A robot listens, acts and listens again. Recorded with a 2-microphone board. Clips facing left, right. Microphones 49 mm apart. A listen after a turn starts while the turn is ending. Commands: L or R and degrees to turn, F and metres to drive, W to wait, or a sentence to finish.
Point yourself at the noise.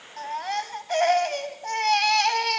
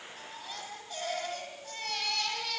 L65
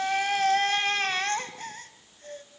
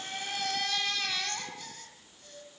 L45
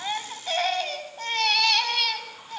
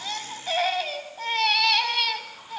Facing the baby crying, 2 to 4 m away.